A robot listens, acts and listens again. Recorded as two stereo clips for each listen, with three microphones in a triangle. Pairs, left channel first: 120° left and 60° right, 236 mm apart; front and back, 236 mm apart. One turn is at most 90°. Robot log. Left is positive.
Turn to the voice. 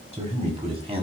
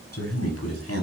end: Facing the man speaking, over 4 m away.